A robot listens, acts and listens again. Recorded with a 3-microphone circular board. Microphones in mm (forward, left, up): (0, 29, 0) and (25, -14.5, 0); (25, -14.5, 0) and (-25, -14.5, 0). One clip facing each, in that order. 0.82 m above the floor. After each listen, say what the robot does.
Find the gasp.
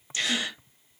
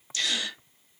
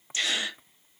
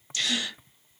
Turn 60° left.
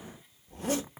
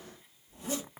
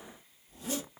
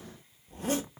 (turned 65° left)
I heard a gasp from this way, but can't make it out now.